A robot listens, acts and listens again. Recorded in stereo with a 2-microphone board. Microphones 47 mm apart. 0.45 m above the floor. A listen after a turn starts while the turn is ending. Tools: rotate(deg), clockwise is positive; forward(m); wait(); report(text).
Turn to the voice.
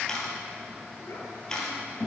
rotate(-65)
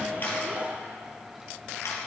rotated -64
wait()
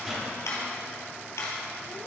wait()
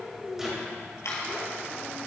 rotate(-10)
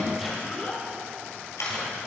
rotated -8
report("Found it: a child speaking, straight ahead.")